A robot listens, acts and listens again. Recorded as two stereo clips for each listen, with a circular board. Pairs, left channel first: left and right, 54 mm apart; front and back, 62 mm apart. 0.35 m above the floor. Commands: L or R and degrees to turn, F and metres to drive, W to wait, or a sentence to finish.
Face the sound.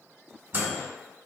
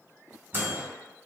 R130
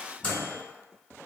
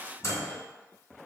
L30
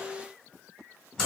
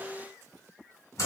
L15
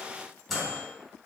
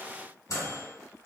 Found it: a microwave, straight ahead, 1 to 2 m away.